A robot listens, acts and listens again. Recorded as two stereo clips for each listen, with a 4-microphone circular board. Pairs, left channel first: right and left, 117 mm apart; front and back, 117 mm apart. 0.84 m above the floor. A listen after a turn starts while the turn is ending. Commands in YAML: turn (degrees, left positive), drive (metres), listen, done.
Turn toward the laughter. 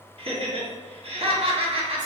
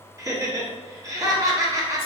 turn: 120
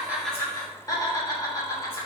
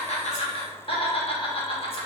turn: -30
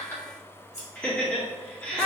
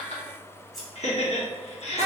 turn: -10
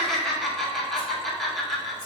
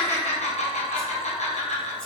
done: "Found it: laughter, straight ahead, 1 to 2 m away."